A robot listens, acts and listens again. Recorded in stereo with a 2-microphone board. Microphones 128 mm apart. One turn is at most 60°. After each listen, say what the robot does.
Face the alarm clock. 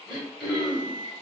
Turn 55° right.
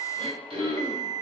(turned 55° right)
Turn 60° right.
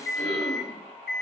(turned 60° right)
Facing the alarm clock.